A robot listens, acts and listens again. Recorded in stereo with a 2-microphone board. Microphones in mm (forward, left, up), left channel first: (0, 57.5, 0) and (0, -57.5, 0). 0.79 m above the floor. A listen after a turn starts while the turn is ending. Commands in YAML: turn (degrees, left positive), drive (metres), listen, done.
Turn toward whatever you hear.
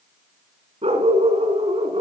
turn: -65
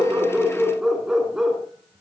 done: "Facing the dog barking."